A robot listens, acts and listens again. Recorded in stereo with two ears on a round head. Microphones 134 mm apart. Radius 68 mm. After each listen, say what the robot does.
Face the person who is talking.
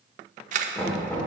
Keep listening.
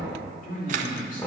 Turn 60° left.
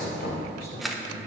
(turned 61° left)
Turn 65° left.
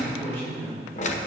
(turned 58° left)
Turn 15° left.
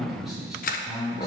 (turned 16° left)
Facing the man speaking.